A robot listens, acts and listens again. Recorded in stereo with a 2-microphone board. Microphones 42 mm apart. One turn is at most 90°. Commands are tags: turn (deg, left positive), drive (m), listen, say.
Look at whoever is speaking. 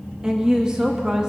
<turn deg="-20"/>
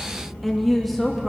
<say>Found it: a woman speaking, straight ahead, under 1 m away.</say>